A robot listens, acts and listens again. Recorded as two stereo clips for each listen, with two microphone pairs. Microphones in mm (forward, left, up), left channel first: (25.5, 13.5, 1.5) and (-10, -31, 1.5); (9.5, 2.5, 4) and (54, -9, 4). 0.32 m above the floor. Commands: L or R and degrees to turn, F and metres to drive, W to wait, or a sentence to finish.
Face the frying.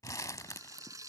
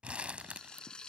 R125
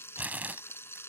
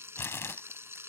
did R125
Facing the frying.